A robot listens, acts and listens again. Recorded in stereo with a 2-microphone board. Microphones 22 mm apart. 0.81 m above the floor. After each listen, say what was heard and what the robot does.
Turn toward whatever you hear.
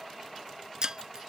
The breaking glass: about 40° right or 140° right. Turn 40° right.
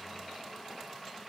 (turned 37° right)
Keep listening.
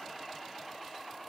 I heard breaking glass, but can't make it out now. It was about straight ahead or 105° right.